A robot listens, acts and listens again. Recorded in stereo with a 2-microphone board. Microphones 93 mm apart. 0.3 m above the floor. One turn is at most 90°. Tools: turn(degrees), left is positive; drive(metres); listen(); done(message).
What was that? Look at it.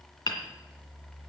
turn(degrees=55)
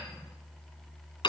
turn(degrees=65)
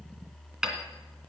done("Facing the hammering, 2 to 4 m away.")